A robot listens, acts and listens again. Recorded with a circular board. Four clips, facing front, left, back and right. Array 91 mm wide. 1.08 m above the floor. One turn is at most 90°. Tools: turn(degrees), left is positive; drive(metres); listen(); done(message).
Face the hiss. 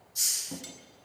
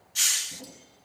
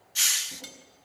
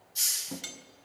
turn(degrees=90)
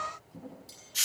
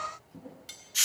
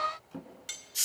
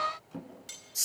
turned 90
turn(degrees=70)
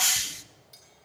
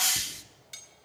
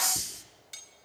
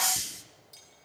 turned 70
turn(degrees=25)
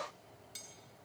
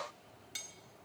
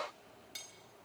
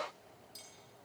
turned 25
listen()
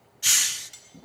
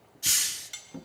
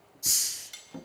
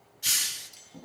done("Found it: a hiss, straight ahead, under 1 m away.")